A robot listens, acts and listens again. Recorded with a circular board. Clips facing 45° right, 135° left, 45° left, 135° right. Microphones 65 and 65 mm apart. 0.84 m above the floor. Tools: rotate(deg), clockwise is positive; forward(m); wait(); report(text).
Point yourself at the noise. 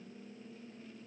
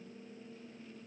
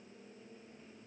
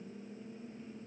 wait()
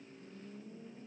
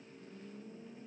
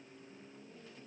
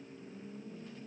wait()
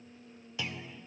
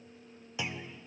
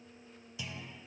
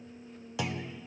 rotate(155)
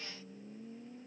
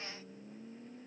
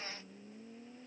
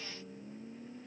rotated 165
rotate(-10)
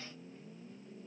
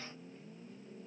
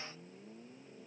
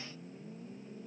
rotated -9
report("Facing where the clunk came from. I can't hear it now.")